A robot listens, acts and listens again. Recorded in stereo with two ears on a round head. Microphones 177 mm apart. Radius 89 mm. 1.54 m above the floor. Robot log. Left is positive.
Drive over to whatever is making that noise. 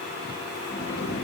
note: The sliding door: about 55° left or 125° left.
cmd yaw +55
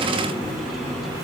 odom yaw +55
cmd fwd 1.0
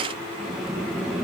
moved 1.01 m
cmd fwd 1.0
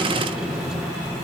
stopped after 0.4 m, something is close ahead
end: I am next to the sliding door.